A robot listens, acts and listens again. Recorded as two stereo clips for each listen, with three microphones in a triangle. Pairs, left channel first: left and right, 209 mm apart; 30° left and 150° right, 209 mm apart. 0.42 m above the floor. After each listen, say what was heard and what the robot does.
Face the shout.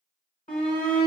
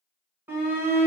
The shout: 135° left. Turn 135° left.
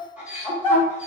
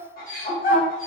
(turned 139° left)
Facing the shout, 1 to 2 m away.